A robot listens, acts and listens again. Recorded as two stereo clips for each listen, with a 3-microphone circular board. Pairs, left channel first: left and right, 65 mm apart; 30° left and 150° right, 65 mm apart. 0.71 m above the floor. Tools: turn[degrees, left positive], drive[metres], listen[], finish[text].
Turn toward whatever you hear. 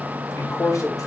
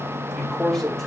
Thought: The man speaking: 110° left.
Action: turn[110]
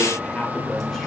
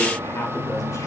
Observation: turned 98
Thought: Nothing new. It was at 15° left.
Action: turn[15]
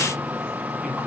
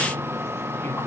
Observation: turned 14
Thought: The man speaking is now 20° right.
Action: turn[-20]
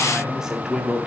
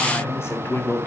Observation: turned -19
Thought: The man speaking is now 20° right.
Action: turn[-20]
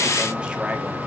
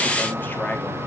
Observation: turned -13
Action: listen[]
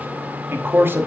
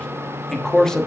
Thought: The man speaking is now 50° right.
Action: turn[-50]
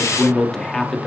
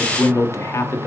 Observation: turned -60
Thought: The man speaking is now 10° left.
Action: turn[10]
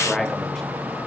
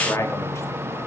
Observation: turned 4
Action: finish[Found it: a man speaking, straight ahead, 1 to 2 m away.]